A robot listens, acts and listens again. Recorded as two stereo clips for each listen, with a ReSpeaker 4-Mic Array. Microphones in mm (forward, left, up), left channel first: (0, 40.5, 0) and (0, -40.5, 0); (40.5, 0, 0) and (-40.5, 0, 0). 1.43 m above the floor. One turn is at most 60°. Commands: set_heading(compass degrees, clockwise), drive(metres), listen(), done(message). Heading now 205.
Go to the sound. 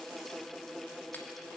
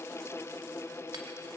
set_heading(145)
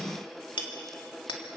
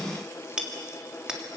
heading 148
set_heading(88)
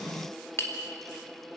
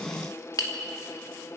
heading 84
set_heading(49)
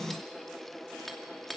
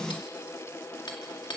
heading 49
drive(1.0)
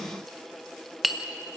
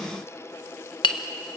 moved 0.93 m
drive(1.0)
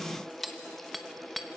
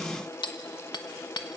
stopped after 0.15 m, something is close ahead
done("Arrived at the hammering, straight ahead.")